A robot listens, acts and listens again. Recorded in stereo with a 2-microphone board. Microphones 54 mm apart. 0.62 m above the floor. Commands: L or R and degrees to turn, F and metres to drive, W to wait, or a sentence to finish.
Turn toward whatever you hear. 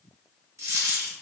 R75
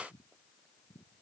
W
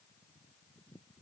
I heard a dropped coin, but can't make it out now. It was about straight ahead or 30° right.